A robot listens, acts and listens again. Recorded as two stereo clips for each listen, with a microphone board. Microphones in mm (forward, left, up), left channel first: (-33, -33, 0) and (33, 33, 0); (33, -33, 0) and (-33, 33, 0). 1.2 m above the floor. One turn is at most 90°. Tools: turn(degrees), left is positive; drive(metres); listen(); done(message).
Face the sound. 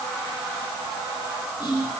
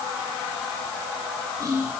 turn(degrees=-90)
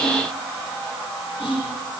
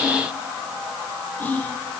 turn(degrees=-90)
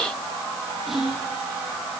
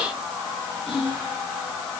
turn(degrees=-40)
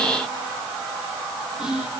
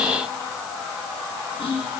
turn(degrees=-35)
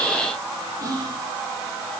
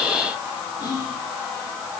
done("Facing the whispering, 2 to 4 m away.")